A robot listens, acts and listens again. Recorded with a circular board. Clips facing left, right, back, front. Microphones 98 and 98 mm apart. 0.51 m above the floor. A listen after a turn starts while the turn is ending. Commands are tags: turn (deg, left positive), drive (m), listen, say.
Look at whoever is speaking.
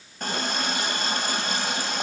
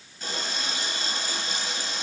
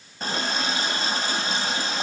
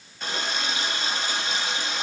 <listen/>
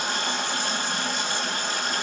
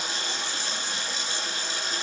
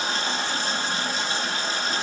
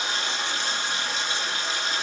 <listen/>
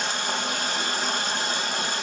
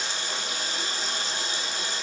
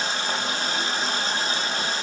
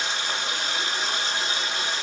<say>I can't make out anyone speaking to turn to.</say>